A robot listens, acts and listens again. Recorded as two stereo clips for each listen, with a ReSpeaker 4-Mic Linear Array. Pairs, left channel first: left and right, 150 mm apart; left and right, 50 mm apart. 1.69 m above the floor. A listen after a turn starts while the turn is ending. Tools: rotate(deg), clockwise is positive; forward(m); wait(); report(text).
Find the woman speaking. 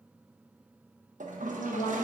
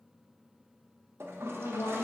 rotate(-90)
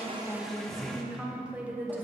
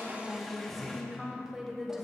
rotate(15)
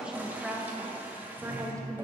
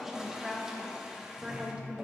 rotate(25)
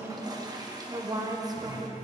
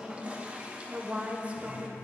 rotate(25)
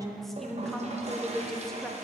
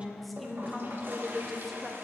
report("Found it: a woman speaking, straight ahead.")